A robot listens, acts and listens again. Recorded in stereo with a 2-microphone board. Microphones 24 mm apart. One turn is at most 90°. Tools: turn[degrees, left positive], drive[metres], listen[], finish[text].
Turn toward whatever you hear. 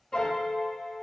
Thought: The piano: about 40° left or 140° left.
Action: turn[40]
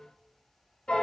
Thought: So it is at 90° left.
Action: turn[90]
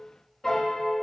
Thought: The piano is now 10° left.
Action: turn[10]
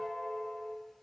Action: finish[Facing the piano, under 1 m away.]